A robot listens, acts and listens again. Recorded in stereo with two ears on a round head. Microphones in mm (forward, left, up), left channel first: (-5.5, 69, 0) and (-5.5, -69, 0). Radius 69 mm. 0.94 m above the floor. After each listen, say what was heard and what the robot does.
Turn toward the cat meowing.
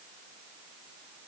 Keep listening.
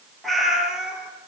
Turn 30° right.
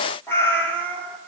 So it is at 10° left. Turn 10° left.
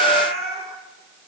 Found it: a cat meowing, straight ahead.